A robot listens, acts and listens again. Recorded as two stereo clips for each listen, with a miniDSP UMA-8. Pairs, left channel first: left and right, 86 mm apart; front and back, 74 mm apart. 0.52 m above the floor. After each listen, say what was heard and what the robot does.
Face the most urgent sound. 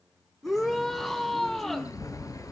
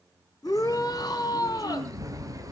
Facing the shout.